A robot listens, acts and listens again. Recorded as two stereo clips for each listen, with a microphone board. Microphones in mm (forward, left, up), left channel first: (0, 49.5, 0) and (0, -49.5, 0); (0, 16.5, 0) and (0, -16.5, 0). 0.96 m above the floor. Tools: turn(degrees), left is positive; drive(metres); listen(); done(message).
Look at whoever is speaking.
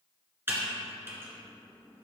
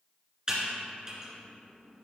listen()
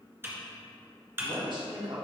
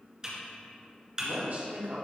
turn(degrees=-55)
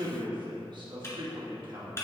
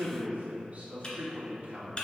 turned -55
turn(degrees=-60)
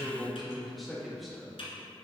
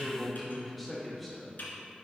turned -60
done("Facing the man speaking, 1 to 2 m away.")